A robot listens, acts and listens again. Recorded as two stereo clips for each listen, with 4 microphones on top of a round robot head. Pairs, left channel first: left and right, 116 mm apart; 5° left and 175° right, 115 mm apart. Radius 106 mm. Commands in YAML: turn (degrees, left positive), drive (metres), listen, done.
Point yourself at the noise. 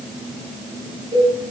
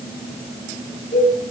turn: -40
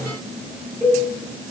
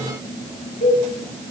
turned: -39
done: "Found it: a cowbell, straight ahead, over 4 m away."